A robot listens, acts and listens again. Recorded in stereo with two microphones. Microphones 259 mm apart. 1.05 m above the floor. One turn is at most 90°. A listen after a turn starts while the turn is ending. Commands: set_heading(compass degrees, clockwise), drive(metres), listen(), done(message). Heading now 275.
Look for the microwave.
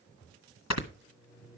set_heading(305)
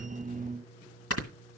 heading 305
set_heading(285)
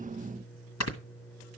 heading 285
done("Found it: a microwave, straight ahead, over 4 m away.")